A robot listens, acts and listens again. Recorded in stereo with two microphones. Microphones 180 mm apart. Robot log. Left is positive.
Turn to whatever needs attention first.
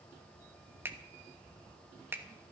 cmd idle
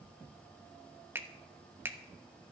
cmd idle
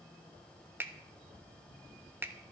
end: I can't make out anything urgent, only a finger snap.